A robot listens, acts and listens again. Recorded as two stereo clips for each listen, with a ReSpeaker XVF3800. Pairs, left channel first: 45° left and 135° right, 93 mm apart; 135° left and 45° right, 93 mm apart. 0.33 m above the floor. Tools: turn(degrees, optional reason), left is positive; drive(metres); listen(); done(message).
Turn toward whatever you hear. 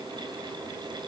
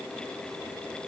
listen()
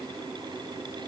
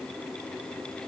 listen()
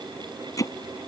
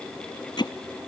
turn(degrees=95, reason="The hammering: 95° left.")
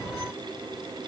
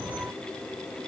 listen()
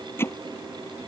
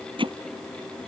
turn(degrees=-20, reason="The hammering is now 20° right.")
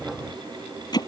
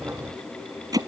done("Facing the hammering.")